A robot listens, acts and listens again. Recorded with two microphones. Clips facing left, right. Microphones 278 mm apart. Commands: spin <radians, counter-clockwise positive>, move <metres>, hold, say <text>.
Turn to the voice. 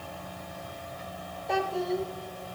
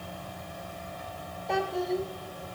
spin 0.52
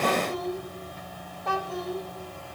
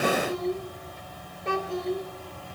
spin -0.52
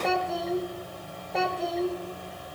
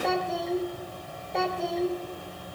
say Facing the child speaking.